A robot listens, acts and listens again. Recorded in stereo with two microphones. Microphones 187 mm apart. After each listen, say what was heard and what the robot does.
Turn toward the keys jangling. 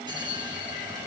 Keep listening.
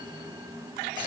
Keep listening.
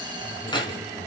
The keys jangling: about 25° left or 155° left. Turn 25° left.
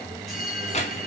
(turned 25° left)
Keep listening.
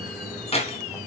The keys jangling: about 35° left or 145° left. Turn 35° left.
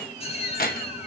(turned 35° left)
So it is at 125° left. Turn 125° left.
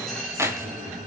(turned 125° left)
The keys jangling is now 15° right. Turn 15° right.
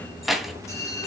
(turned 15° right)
Found it: keys jangling, straight ahead, 2 to 4 m away.